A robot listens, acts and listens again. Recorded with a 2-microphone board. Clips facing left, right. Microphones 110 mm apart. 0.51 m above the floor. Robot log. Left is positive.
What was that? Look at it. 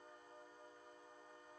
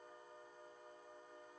cmd idle
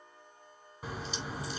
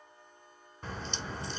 cmd yaw +30
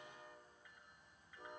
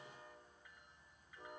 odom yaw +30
cmd idle
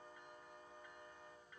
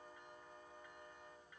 end: I heard a crack, but can't make it out now. It was about 25° right or 145° left.